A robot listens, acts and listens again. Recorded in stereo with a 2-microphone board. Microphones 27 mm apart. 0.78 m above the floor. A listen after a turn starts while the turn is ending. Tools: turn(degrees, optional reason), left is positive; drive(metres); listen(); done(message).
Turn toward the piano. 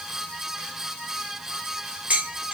listen()
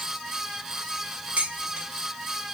listen()
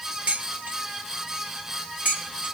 done("I can't make out a piano to turn to.")